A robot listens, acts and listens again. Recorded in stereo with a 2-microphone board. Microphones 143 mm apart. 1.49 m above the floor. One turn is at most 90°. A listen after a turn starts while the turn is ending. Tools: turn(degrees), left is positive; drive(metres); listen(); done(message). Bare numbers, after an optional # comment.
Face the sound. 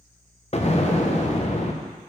# The explosion: about 50° left or 130° left.
turn(50)
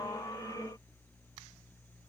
listen()
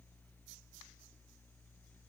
done("I heard an explosion, but can't make it out now. It was about straight ahead or 80° left.")